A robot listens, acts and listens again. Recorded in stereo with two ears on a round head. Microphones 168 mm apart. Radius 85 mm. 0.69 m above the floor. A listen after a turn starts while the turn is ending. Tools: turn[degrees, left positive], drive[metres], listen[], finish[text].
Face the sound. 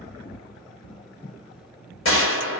Thought: The gunshot: about 70° left or 110° left.
Action: turn[70]
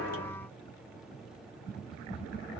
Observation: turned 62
Action: listen[]
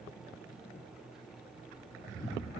Action: finish[I heard a gunshot, but can't make it out now. It was about 10° left or 45° left.]